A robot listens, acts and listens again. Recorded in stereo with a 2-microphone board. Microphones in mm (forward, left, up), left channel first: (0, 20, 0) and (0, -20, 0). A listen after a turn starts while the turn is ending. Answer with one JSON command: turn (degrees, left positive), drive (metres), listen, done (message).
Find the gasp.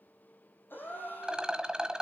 {"turn": 55}
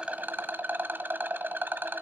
{"listen": true}
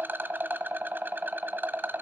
{"done": "I heard a gasp, but can't make it out now. It was about straight ahead or 70° left."}